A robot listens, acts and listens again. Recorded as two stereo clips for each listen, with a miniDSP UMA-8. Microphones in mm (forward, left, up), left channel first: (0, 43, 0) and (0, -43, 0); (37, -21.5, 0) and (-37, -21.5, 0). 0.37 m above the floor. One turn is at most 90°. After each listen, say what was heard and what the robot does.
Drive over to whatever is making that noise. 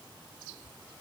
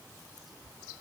Keep listening.
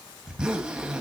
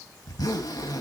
The zipper: 10° right. Turn 10° right.
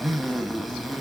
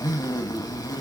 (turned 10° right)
Drive 1.0 m forward.
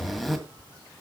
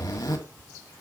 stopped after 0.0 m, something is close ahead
Blocked. The zipper is further on, straight ahead.